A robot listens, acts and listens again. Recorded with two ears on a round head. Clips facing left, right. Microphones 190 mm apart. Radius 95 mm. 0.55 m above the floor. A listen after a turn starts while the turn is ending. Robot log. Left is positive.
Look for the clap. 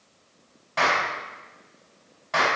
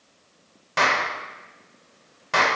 note: The clap: about 65° right or 115° right.
cmd yaw -65
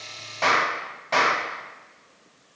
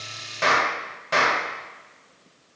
note: So it is at 15° right.
cmd yaw -15
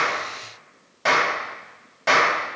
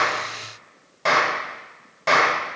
end: Found it: a clap, straight ahead, 1 to 2 m away.